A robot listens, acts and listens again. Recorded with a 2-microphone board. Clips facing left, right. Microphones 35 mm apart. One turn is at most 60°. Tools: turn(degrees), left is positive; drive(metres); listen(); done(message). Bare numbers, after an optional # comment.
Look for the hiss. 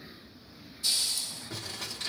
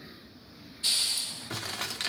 # The hiss: about 40° right or 140° right.
turn(-40)
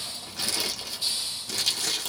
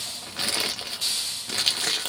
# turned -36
# So it is at 100° right.
turn(-60)
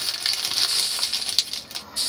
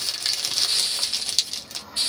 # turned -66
# The hiss is now 35° right.
turn(-35)
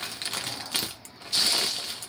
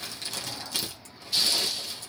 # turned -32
done("Found it: a hiss, straight ahead, under 1 m away.")